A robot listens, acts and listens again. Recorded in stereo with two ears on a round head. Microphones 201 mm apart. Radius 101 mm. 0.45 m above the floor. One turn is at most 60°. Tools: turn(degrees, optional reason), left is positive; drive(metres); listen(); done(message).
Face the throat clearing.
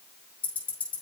listen()
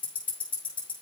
listen()
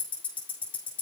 done("I can't make out throat clearing, only ticking.")